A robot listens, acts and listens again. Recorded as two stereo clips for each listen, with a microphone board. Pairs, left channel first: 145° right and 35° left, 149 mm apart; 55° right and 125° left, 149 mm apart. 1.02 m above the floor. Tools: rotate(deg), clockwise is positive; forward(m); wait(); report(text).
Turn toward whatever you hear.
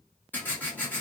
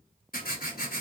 rotate(65)
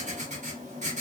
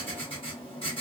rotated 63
report("Found it: writing, straight ahead, 1 to 2 m away.")